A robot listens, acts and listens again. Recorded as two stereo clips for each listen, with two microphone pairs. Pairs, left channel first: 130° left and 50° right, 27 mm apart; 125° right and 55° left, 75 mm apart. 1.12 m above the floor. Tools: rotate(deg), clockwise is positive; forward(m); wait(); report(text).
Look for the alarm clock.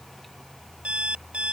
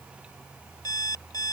rotate(90)
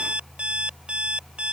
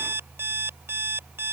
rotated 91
report("Found it: an alarm clock, straight ahead.")